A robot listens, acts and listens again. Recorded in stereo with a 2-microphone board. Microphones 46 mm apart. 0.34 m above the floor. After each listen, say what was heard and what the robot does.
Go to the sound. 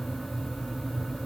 Keep listening.
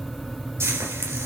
The frying: about 70° right or 110° right. Turn 70° right.
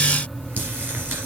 Keep listening.
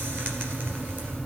Keep listening.
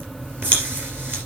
So it is at 40° right. Turn 40° right.
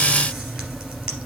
Keep listening.
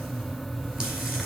Keep listening.
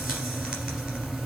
Facing where the frying came from. I can't hear it now. I did not reach it.